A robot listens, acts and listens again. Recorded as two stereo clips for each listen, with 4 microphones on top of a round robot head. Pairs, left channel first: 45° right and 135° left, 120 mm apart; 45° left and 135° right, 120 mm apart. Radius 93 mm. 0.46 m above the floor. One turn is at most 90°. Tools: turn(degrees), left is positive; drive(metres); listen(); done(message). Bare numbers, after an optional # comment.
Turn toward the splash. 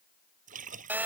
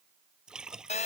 # The splash: 140° left.
turn(90)
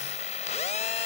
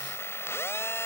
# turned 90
# Nothing new. It was at 50° left.
turn(50)
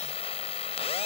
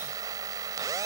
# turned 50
done("I heard a splash from this way, but can't make it out now.")